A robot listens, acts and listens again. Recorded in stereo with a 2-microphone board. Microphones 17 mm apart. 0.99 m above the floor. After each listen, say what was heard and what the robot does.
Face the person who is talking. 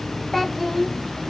Turn 30° left.
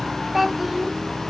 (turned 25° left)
So it is at 15° right. Turn 15° right.
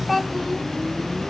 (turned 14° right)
Facing the child speaking, 1 to 2 m away.